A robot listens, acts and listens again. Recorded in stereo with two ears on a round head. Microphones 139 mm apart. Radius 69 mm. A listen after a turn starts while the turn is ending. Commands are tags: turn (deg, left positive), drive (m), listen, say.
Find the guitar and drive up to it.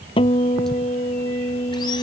<turn deg="35"/>
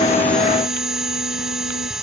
<listen/>
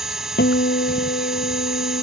<turn deg="110"/>
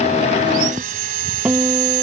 <drive m="1.0"/>
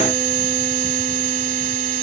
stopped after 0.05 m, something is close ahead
<listen/>
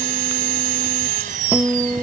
<say>Blocked. The guitar is further on, straight ahead.</say>